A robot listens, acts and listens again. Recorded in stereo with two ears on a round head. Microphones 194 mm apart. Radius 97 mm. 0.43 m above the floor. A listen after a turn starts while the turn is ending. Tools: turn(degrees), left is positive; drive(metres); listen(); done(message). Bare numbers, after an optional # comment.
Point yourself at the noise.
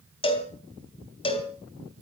# The cowbell: about 25° left or 155° left.
turn(25)
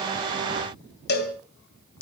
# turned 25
# So it is at 125° left.
turn(125)
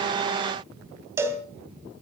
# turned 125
# The cowbell is now 10° right.
turn(-10)
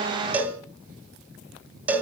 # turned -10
# The cowbell is now 10° right.
turn(-10)
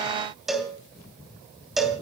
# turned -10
done("Found it: a cowbell, straight ahead, 2 to 4 m away.")